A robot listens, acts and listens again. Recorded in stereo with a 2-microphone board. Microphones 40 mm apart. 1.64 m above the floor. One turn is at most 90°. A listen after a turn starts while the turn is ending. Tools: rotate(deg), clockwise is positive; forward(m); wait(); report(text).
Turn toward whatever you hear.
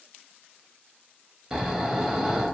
rotate(30)
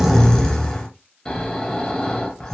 rotate(-15)
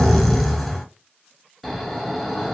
report("Found it: snoring, straight ahead.")